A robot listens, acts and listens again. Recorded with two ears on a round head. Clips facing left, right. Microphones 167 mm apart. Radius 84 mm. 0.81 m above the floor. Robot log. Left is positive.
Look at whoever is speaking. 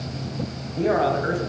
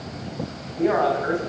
note: The man speaking: about 35° left or 145° left.
cmd yaw +35
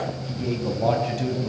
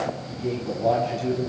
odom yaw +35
note: So it is at 105° left.
cmd yaw +105
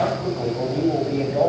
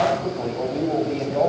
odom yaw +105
end: Found it: a man speaking, straight ahead, over 4 m away.